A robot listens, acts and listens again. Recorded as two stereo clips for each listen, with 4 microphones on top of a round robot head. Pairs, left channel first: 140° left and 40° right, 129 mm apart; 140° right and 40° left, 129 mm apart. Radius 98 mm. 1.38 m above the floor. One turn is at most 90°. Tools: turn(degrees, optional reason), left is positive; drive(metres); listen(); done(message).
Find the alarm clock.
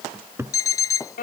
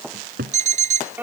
turn(degrees=70, reason="The alarm clock: 70° left.")
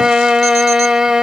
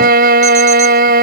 listen()
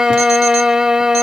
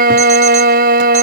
listen()
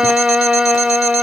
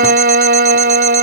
done("I heard an alarm clock from this way, but can't make it out now.")